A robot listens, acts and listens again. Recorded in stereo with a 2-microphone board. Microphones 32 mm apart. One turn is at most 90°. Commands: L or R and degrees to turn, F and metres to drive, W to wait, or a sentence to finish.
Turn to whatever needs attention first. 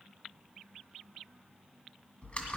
W
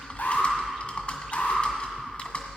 L65
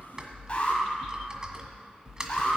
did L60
L40
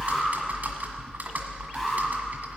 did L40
Facing the alarm, 2 to 4 m away.